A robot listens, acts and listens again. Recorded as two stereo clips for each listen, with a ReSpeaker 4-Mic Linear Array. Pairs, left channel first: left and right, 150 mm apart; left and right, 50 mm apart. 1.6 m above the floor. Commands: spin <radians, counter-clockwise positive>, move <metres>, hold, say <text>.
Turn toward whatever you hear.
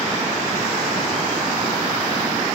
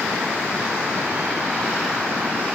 hold
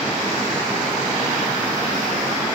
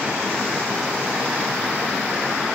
hold
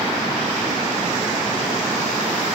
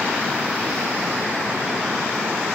say I can't make out anything.